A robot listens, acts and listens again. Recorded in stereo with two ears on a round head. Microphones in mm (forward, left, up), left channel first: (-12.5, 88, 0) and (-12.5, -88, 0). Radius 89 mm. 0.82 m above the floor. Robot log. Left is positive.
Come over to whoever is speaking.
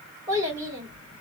note: The child speaking: about 15° right or 165° right.
cmd yaw -15
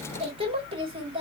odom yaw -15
note: So it is at 150° right.
cmd yaw -150
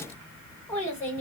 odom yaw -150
note: The child speaking is now 10° left.
cmd yaw +10
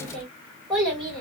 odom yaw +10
cmd fwd 1.0
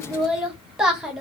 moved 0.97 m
cmd fwd 1.0
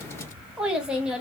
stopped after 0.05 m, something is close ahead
end: I am next to the child speaking.